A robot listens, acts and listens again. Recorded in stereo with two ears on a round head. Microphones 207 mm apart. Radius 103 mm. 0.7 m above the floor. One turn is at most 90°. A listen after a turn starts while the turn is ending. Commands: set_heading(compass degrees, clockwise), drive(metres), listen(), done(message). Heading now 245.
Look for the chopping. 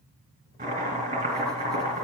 set_heading(275)
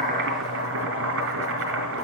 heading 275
set_heading(5)
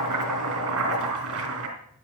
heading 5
set_heading(70)
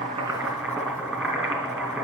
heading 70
done("Facing the chopping.")